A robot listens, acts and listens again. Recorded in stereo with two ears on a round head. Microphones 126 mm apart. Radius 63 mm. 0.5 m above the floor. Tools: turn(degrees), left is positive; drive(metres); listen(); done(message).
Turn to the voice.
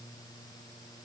listen()
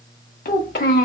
turn(degrees=65)
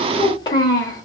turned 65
turn(degrees=30)
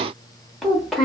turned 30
done("Facing the child speaking.")